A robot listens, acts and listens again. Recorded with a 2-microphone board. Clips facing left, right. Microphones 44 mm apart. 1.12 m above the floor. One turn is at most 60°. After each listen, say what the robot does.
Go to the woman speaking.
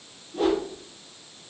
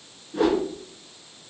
Keep listening.
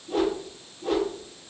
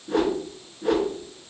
Keep listening.
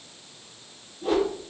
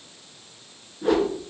I can't make out a woman speaking to turn to.